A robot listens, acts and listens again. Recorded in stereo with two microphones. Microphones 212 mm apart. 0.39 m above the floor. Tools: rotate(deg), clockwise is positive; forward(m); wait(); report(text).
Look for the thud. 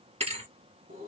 rotate(30)
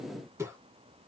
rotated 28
wait()
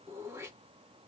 report("I heard a thud, but can't make it out now. It was about straight ahead or 125° right.")